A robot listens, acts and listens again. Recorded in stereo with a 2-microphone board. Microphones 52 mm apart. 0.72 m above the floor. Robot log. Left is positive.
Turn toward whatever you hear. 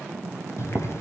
note: The boiling: about 55° left or 125° left.
cmd yaw +55
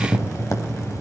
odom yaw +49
note: So it is at 75° left.
cmd yaw +75
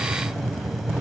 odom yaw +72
end: Facing the boiling.